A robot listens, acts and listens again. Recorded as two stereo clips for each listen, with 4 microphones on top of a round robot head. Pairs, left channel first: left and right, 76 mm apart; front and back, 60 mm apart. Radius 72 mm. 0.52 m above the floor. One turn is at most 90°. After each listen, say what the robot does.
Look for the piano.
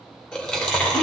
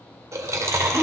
Keep listening.
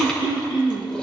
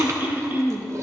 Keep listening.
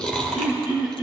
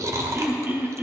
I can't make out a piano to turn to.